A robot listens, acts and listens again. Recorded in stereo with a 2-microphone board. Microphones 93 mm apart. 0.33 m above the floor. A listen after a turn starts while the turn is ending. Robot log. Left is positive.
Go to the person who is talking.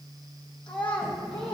note: The child speaking: about 65° left or 115° left.
cmd yaw +65
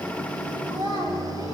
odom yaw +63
note: So it is at 45° left.
cmd yaw +45
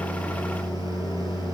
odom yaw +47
cmd idle
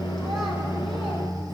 cmd idle
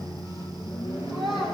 cmd fwd 1.0
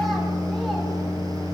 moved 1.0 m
cmd idle
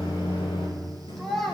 cmd fwd 1.0
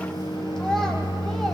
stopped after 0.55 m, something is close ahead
cmd idle
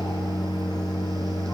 cmd idle
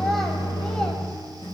end: Facing where the child speaking came from. I can't hear it now. I did not reach it.